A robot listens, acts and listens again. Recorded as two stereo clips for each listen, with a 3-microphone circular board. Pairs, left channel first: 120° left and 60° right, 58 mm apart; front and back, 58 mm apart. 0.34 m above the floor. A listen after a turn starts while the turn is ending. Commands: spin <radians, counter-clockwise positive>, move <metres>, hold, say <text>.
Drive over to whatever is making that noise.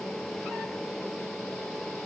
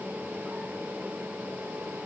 hold
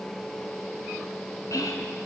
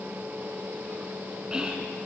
spin 1.83
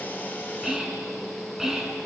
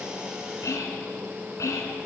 spin 0.35
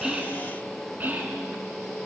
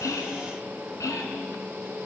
move 1.0
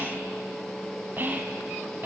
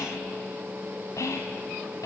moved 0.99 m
move 1.0
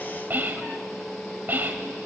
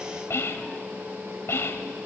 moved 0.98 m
spin -0.26
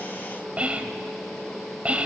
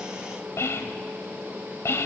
move 1.0
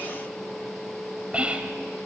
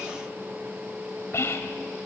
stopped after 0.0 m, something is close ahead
say Arrived at the whispering, straight ahead.